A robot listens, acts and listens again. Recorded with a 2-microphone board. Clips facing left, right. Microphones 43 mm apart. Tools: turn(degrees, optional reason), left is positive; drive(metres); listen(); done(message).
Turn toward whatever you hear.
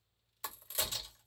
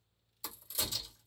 turn(degrees=50, reason="The crack: about 50° left or 130° left.")
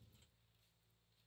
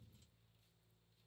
listen()
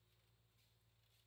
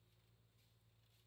done("I heard a crack, but can't make it out now. It was about straight ahead or 80° left.")